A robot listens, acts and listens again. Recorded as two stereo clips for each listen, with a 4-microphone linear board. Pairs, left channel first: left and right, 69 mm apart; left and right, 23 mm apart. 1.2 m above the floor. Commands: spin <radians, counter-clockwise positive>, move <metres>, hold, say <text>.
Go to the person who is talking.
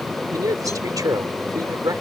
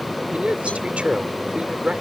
spin -1.05
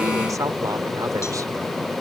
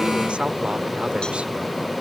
hold
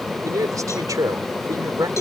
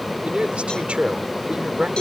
spin -0.96
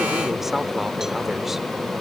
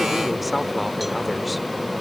hold
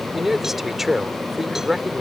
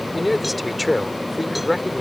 move 1.0
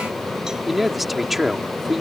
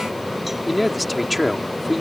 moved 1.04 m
move 1.0
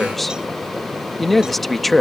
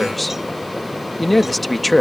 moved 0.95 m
move 1.0
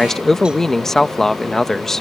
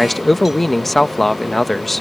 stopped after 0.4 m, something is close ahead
say Arrived at the man speaking, straight ahead.